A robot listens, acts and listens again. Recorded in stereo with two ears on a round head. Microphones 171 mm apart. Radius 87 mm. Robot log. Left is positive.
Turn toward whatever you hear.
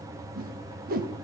note: The whoosh: about 50° right or 130° right.
cmd yaw -50
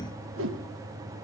note: So it is at 80° right.
cmd yaw -80
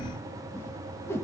note: The whoosh is now 15° left.
cmd yaw +15
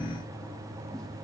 cmd idle
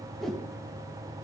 end: Facing the whoosh, 1 to 2 m away.